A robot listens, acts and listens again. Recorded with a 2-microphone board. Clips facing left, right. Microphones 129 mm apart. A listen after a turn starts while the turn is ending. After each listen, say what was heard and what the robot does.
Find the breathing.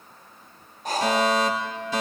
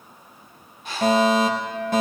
The breathing: about 40° left or 140° left. Turn 40° left.
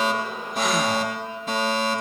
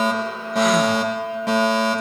Keep listening.
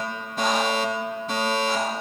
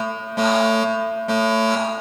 Keep listening.
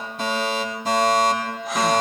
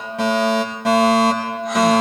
I heard breathing, but can't make it out now. It was about straight ahead or 100° left.